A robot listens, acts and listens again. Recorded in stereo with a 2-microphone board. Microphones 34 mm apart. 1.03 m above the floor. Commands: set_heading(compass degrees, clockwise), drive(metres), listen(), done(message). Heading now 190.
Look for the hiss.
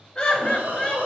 set_heading(255)
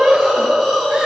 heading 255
done("Found it: a hiss, straight ahead, under 1 m away.")